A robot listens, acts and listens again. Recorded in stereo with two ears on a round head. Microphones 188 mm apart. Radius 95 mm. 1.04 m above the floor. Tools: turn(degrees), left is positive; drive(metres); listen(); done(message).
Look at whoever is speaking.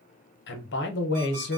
turn(degrees=60)
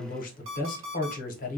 turn(degrees=45)
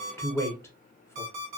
turn(degrees=15)
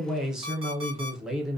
done("Found it: a man speaking, straight ahead.")